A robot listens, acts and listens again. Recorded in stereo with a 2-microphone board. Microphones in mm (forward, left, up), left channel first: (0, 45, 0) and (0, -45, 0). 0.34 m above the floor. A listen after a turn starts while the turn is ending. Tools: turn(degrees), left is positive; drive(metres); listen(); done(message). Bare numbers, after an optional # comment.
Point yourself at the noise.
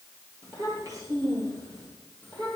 # The child speaking: about 40° right or 140° right.
turn(-40)
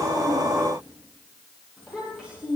done("Facing the child speaking, over 4 m away.")